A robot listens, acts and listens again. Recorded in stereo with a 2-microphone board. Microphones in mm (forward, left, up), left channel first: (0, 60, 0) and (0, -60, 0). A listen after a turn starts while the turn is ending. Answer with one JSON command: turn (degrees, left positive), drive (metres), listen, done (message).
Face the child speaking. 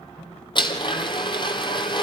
{"listen": true}
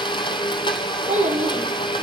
{"turn": -90}
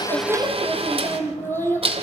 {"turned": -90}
{"turn": 20}
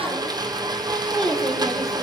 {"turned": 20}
{"done": "Facing the child speaking."}